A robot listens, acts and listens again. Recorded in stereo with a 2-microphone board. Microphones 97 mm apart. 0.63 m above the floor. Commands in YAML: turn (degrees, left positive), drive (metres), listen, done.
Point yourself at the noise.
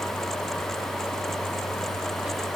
listen: true
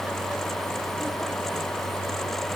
listen: true
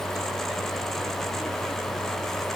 done: "I can't make out anything."